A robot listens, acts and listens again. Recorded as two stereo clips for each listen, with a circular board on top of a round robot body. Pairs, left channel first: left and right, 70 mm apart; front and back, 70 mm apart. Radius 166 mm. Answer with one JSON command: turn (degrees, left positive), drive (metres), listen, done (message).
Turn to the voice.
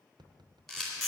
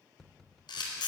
{"listen": true}
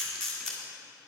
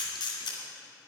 {"listen": true}
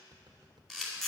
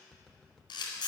{"done": "I can't make out anyone speaking, only tapping and a camera shutter."}